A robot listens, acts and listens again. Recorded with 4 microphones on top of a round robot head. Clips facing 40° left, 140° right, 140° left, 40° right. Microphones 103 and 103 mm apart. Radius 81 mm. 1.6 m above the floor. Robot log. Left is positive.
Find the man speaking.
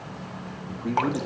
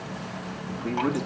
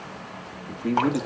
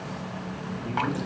note: The man speaking: 120° left.
cmd yaw +120
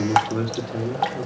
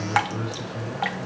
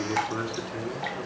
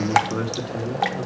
note: The man speaking is now 30° left.
cmd yaw +30
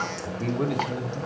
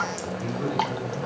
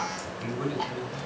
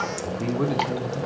end: Facing the man speaking.